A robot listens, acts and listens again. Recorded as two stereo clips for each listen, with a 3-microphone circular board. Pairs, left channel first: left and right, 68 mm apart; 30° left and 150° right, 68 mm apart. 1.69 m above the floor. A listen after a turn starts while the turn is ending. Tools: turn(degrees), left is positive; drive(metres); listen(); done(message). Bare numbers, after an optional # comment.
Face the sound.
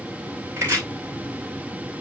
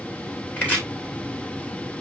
# The chopping: 35° right.
turn(-35)
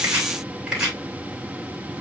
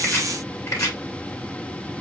# The chopping is now 10° right.
turn(-10)
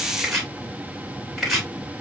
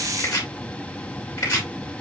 done("Found it: chopping, straight ahead, 2 to 4 m away.")